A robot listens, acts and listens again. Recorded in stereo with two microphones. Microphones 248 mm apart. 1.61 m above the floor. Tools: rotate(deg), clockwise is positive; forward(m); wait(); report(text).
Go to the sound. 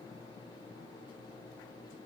wait()
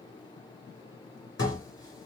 rotate(-90)
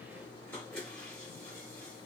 forward(1.0)
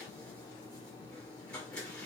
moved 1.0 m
forward(1.0)
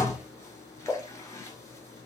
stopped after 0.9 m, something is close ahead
rotate(-15)
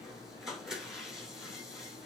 report("Arrived at the dishes clattering, straight ahead.")